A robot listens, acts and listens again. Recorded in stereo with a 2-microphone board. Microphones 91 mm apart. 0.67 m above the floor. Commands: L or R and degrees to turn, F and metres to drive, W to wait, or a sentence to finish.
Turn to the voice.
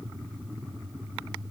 W
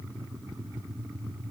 W
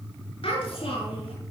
L90
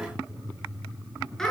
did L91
Facing the child speaking, over 4 m away.